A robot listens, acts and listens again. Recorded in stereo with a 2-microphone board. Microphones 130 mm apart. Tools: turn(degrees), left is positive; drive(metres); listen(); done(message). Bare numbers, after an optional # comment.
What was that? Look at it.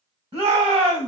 # The shout: about 40° right or 140° right.
turn(-40)
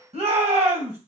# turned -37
# So it is at 95° right.
turn(-95)
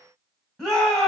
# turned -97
done("Found it: a shout, straight ahead, 2 to 4 m away.")